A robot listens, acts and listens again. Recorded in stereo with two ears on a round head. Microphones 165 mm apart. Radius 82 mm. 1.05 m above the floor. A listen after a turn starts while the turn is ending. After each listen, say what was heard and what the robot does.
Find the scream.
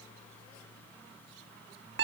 Keep listening.
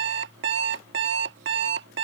Keep listening.
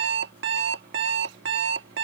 I can't make out a scream to turn to.